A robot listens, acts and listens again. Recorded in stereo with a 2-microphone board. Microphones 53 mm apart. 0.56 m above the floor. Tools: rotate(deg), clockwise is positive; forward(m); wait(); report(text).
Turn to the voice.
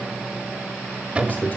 rotate(-35)
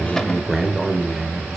report("Found it: a man speaking, straight ahead, 1 to 2 m away.")